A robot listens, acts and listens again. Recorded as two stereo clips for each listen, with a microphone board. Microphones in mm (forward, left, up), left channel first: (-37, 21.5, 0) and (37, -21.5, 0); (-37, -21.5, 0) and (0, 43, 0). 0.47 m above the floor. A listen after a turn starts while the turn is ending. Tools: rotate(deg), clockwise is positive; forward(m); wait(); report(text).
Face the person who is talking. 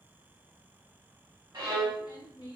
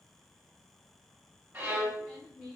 rotate(-135)
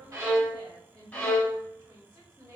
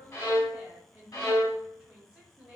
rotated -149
rotate(15)
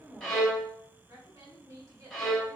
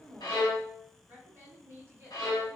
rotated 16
report("Facing the woman speaking.")